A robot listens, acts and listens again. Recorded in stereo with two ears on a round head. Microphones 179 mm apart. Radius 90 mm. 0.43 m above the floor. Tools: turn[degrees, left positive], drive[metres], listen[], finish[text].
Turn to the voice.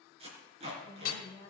Thought: The woman speaking: about 20° left or 160° left.
Action: turn[20]
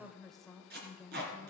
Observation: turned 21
Action: finish[Found it: a woman speaking, straight ahead.]